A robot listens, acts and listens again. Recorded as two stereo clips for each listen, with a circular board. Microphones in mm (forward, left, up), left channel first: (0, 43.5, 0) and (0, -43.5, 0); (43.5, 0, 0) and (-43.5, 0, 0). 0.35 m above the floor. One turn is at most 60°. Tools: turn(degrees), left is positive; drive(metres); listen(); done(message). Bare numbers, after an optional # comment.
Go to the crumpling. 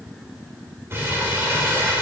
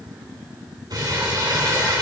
# The crumpling: 150° right.
turn(-60)
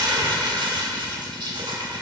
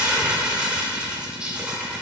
# The crumpling is now 100° right.
turn(-60)
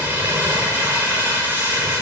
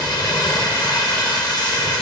# The crumpling is now 30° right.
turn(-30)
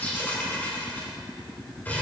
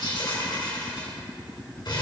# The crumpling is now 20° left.
turn(20)
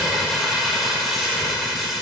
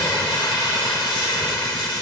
drive(1.0)
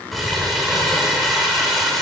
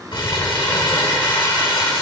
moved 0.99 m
drive(1.0)
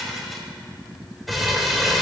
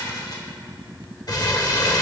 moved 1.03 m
drive(1.0)
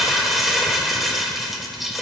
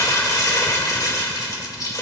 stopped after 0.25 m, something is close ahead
done("I am next to the crumpling.")